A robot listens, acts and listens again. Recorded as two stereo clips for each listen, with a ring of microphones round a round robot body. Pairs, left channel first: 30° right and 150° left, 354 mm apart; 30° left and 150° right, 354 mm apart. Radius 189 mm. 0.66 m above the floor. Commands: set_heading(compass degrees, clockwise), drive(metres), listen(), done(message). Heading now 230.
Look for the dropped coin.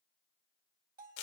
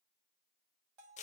listen()
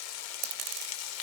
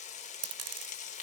set_heading(70)
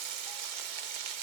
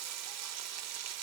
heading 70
done("I heard a dropped coin from this way, but can't make it out now.")